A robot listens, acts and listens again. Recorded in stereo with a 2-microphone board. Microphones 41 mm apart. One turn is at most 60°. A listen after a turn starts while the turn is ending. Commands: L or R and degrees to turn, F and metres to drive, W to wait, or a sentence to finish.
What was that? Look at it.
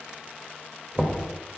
R25
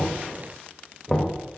Facing the knocking.